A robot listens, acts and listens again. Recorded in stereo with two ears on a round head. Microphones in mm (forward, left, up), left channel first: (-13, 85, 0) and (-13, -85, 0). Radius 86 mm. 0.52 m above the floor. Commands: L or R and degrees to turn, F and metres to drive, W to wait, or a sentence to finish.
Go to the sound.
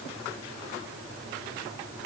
W
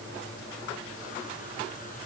W
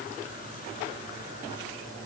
I can't make out anything to turn to.